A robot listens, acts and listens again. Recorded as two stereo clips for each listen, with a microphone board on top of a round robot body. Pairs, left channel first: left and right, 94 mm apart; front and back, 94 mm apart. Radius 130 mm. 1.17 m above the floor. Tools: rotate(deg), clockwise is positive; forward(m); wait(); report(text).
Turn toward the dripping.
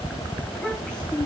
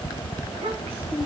wait()
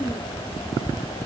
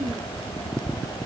wait()
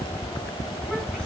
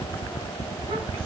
report("I can't make out dripping to turn to.")